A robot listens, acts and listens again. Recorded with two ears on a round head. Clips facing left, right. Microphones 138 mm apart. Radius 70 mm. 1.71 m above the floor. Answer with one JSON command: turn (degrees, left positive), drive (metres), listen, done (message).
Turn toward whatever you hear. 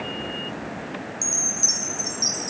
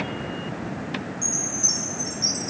{"turn": 55}
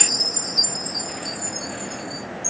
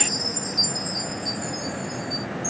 {"turn": 25}
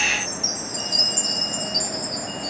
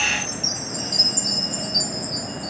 {"done": "Facing the chime."}